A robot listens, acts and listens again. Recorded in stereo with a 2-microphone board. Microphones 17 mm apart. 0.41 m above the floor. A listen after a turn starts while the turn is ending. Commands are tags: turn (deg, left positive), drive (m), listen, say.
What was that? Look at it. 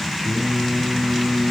<turn deg="-45"/>
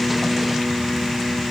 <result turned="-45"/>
<listen/>
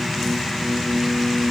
<turn deg="-55"/>
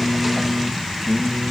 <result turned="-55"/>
<say>Facing the singing, 2 to 4 m away.</say>